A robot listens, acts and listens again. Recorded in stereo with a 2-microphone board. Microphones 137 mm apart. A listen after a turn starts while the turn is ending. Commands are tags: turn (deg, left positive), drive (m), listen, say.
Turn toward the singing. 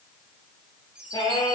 <turn deg="30"/>
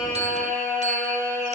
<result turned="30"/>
<say>Facing the singing.</say>